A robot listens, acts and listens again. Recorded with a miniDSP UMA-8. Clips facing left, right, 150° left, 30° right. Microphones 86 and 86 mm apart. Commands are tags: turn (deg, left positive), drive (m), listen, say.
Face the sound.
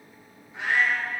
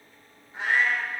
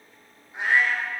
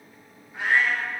<turn deg="-145"/>
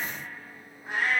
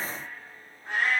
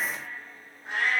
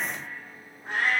<turn deg="10"/>
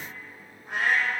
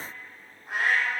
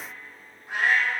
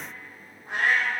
<say>Facing the cat meowing, 2 to 4 m away.</say>